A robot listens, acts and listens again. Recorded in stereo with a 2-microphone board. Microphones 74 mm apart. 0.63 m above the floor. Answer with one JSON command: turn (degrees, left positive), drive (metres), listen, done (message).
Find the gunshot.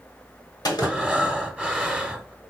{"turn": 55}
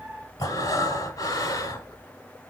{"listen": true}
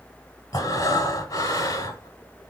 {"done": "I heard a gunshot, but can't make it out now. It was about straight ahead or 70° left."}